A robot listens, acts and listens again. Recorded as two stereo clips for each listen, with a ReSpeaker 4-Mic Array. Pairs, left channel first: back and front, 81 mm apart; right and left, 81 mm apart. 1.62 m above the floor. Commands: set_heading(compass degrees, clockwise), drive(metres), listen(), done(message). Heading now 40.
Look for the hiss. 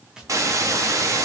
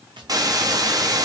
set_heading(350)
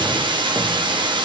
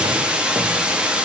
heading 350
set_heading(335)
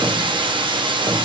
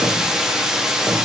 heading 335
set_heading(325)
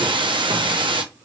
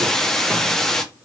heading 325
done("Facing the hiss.")